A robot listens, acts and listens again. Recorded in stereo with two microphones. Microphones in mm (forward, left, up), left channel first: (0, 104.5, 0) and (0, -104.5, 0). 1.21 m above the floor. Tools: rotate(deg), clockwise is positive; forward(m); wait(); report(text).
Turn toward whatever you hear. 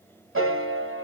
rotate(90)
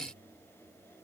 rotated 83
wait()
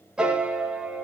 report("Found it: a piano, straight ahead, 1 to 2 m away.")